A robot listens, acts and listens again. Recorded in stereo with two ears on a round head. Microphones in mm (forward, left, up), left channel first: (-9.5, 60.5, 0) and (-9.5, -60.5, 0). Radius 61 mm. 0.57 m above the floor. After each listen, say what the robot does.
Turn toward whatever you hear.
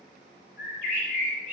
Turn 60° left.
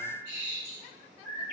Turn 60° left.
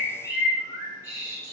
Turn 25° left.
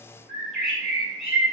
Facing the bird.